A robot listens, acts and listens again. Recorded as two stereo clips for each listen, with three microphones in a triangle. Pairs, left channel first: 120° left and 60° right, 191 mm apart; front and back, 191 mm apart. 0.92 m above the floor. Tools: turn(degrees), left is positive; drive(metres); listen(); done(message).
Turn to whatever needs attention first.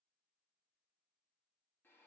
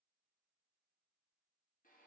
listen()
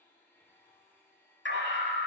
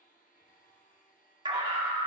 turn(degrees=115)
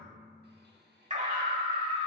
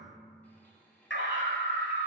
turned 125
turn(degrees=-10)
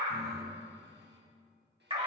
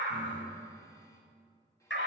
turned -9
done("Found it: a scream, straight ahead, 2 to 4 m away.")